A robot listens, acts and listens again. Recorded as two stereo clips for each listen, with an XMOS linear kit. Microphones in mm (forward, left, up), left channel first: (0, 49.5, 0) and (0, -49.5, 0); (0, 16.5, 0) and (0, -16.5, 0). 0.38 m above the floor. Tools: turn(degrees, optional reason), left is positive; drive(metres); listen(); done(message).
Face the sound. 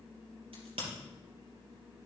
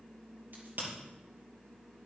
turn(degrees=-70, reason="The crack: about 70° right or 110° right.")
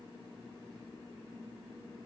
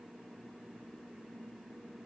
listen()
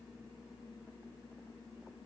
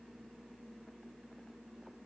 done("I heard a crack, but can't make it out now. It was about straight ahead or 40° right.")